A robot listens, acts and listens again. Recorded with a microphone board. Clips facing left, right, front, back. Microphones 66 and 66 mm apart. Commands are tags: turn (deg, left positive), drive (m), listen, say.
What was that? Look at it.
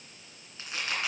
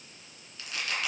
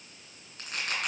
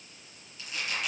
<turn deg="30"/>
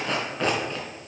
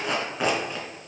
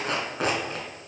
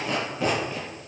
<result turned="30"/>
<turn deg="-10"/>
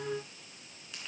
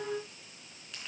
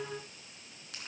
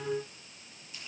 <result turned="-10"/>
<listen/>
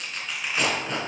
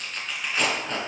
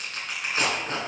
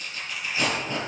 <say>Found it: tearing paper, straight ahead, 2 to 4 m away.</say>